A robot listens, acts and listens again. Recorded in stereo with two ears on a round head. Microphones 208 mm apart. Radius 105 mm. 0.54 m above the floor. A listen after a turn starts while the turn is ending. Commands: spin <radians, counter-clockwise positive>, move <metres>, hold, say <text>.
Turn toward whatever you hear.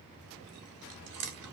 spin -1.22
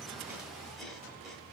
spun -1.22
hold
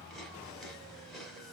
say Facing the chewing.